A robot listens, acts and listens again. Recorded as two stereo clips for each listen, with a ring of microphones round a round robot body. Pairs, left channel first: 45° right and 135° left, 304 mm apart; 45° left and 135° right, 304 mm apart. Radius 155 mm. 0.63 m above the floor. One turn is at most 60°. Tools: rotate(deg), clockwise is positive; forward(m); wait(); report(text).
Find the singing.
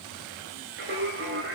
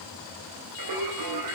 rotate(60)
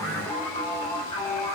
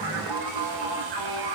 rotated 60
rotate(60)
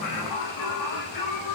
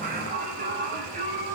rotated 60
rotate(60)
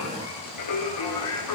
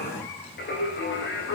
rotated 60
rotate(10)
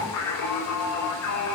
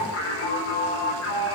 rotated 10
report("Facing the singing, over 4 m away.")